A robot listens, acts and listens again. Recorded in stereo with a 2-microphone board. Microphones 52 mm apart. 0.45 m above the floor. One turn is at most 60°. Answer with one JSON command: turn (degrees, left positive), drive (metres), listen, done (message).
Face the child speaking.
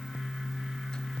{"listen": true}
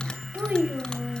{"turn": -35}
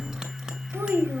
{"turn": -60}
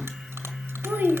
{"turn": -50}
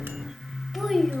{"done": "Facing the child speaking, 1 to 2 m away."}